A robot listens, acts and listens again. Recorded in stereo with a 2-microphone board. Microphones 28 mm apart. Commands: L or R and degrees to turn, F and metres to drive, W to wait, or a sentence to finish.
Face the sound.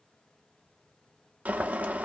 R90
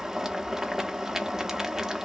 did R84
R15
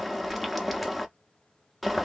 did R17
Facing the boiling, under 1 m away.